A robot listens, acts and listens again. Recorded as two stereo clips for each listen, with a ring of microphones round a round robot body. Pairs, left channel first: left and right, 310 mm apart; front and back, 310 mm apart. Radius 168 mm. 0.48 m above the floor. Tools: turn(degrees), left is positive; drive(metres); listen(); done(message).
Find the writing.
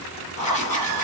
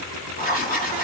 turn(degrees=70)
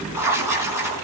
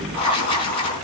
turn(degrees=-10)
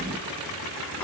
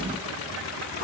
listen()
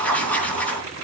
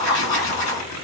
done("Found it: writing, straight ahead.")